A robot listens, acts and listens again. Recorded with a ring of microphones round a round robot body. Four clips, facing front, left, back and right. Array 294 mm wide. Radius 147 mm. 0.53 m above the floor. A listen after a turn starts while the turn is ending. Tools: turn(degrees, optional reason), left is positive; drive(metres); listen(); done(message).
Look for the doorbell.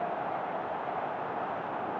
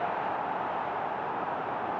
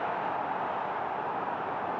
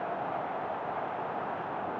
listen()
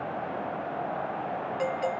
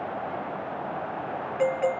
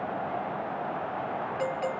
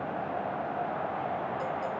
turn(degrees=80, reason="The doorbell: 80° left.")
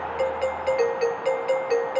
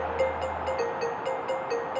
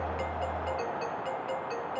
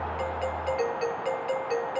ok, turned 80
done("Facing the doorbell.")